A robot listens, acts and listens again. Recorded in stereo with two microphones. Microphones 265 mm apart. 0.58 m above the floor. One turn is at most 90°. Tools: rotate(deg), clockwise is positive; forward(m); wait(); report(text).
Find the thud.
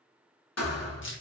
rotate(-65)
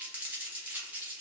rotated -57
wait()
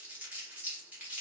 report("I heard a thud, but can't make it out now. It was about 10° left or 55° left.")